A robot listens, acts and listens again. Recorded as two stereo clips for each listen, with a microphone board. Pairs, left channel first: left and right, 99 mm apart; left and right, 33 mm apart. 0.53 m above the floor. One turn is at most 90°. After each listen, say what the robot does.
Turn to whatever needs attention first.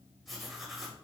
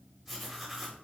Keep listening.
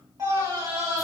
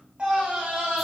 Turn 35° right.
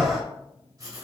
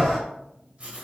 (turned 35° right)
Facing the scream, 1 to 2 m away.